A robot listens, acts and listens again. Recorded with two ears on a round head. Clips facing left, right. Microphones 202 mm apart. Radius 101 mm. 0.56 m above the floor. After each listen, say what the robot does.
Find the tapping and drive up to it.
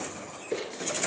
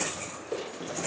Keep listening.
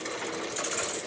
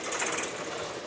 Keep listening.
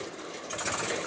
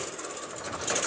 I can't make out tapping to turn to.